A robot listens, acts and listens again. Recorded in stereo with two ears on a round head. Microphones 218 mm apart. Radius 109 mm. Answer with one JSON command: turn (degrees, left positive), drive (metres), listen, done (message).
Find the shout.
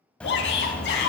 {"turn": 45}
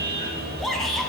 {"done": "Found it: a shout, straight ahead, over 4 m away."}